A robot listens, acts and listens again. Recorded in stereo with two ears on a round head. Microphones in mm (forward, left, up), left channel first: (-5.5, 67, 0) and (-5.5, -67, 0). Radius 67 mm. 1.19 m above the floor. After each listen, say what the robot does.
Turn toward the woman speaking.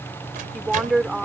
Turn 30° right.
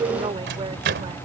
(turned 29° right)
Turn 145° right.
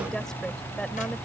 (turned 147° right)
Keep listening.
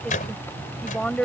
Facing the woman speaking.